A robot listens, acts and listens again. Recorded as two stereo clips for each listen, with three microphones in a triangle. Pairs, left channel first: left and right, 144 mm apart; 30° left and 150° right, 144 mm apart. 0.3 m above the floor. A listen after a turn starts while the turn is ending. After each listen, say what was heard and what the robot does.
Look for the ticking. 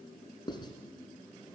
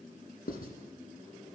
Keep listening.
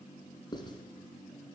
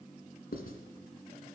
Keep listening.
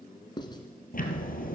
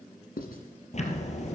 The ticking: 70° left. Turn 70° left.
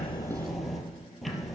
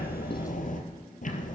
Found it: ticking, straight ahead, 2 to 4 m away.